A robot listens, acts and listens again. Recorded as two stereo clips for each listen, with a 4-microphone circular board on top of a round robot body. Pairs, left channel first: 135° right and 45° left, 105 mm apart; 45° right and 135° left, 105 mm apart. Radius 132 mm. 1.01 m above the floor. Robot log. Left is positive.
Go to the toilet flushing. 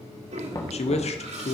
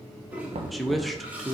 note: The toilet flushing: 60° left.
cmd yaw +60
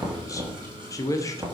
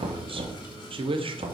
cmd idle
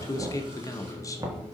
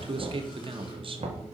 cmd idle
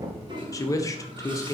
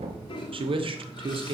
cmd fwd 1.0
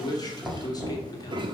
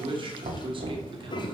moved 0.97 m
cmd fwd 1.0
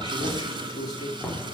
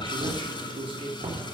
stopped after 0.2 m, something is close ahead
end: I am next to the toilet flushing.